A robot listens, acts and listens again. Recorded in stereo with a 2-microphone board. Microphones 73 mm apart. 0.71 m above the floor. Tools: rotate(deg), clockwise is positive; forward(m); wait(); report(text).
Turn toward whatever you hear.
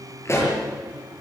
rotate(-35)
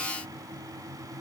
wait()
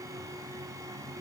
report("I heard a pop, but can't make it out now. It was about straight ahead or 110° left.")